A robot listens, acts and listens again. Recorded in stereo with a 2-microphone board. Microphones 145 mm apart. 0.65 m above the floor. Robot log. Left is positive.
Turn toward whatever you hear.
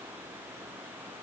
cmd idle
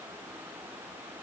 cmd idle
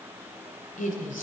note: The woman speaking: about 65° left or 115° left.
cmd yaw +65
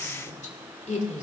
note: So it is at 55° left.
cmd yaw +55
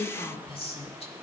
note: The woman speaking is now 45° left.
cmd yaw +45
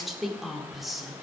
end: Facing the woman speaking, 1 to 2 m away.